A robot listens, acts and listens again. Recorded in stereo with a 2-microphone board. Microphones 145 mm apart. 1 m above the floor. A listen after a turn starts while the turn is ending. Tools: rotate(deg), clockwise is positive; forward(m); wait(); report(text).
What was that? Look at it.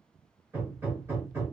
rotate(20)
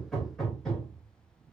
report("Found it: hammering, straight ahead.")